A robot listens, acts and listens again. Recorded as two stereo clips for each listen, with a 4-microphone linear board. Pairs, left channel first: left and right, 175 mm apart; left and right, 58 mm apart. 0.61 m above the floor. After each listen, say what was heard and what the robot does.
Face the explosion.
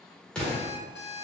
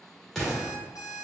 Turn 30° left.
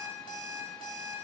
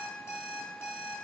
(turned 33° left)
Keep listening.
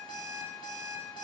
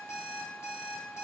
I heard an explosion, but can't make it out now. It was about 30° right or 140° left.